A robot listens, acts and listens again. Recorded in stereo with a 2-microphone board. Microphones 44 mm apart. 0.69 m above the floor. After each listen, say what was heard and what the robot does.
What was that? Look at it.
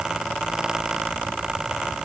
Keep listening.
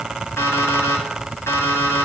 Turn 90° left.
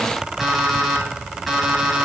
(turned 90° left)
Found it: an alarm clock, straight ahead, 2 to 4 m away.